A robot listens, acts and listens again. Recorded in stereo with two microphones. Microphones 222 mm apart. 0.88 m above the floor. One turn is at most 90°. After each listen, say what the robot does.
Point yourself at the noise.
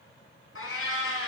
Turn 90° left.
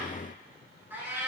Turn 10° right.
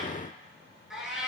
Facing the cat meowing, over 4 m away.